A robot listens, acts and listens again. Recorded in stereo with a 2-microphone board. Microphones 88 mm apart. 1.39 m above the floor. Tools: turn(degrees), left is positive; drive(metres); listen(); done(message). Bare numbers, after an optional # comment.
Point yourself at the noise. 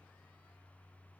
listen()
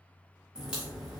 turn(-30)
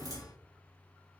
# So it is at 140° right.
turn(-140)
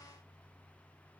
done("I heard a crack from this way, but can't make it out now.")